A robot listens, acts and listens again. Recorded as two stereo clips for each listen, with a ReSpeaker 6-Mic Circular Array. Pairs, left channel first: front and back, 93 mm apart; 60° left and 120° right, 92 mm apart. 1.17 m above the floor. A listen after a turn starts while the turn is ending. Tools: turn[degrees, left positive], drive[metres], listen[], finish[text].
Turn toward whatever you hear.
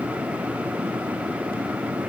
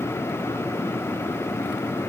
Action: listen[]
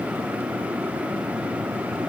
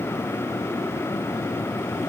Action: listen[]
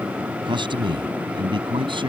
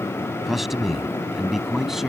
Thought: The man speaking: 155° left.
Action: turn[155]
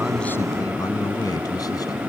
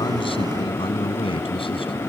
Thought: The man speaking is now 50° left.
Action: turn[50]
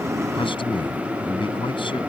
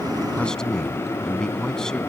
Thought: The man speaking is now 25° right.
Action: turn[-25]
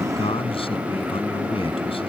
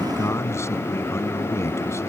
Action: finish[Facing the man speaking.]